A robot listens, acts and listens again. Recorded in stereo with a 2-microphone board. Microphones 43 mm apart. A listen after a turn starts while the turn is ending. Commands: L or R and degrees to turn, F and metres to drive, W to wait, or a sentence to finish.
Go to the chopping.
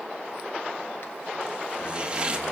R25
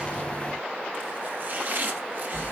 R130
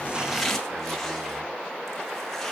W
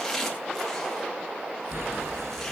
L10
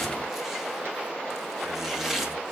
F1.0
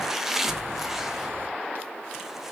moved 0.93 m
R10
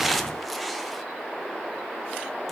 F1.0
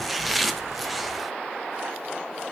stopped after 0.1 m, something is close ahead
Arrived at the chopping, straight ahead.